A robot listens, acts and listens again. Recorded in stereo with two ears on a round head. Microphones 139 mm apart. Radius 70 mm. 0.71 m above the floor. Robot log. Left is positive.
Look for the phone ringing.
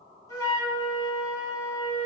cmd idle
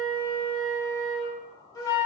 cmd idle
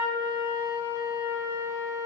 end: I can't make out a phone ringing to turn to.